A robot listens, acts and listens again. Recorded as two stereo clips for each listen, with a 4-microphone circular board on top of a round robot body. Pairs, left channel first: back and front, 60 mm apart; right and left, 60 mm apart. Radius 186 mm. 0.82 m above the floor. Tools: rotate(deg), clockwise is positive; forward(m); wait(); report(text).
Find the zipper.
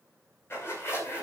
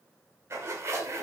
rotate(-130)
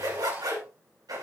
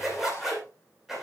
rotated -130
report("Found it: a zipper, straight ahead.")